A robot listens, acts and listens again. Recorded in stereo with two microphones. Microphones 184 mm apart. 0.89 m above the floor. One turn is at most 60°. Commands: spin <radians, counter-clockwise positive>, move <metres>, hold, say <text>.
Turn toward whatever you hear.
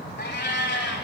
spin 1.05
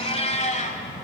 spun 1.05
spin 0.79
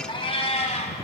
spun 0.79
spin 0.70
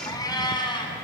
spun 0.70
spin 0.44
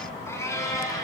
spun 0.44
spin 0.35
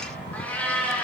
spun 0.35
spin 0.17
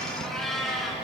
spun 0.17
say Found it: a cat meowing, straight ahead, 2 to 4 m away.